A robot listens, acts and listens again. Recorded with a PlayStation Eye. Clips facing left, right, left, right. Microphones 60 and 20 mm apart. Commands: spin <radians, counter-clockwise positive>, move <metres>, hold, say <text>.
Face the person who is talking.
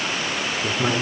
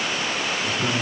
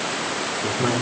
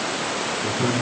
spin 0.52
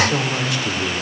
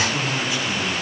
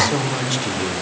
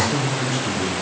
spin 2.09
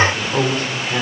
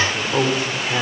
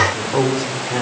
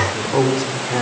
say Found it: a man speaking, straight ahead, 2 to 4 m away.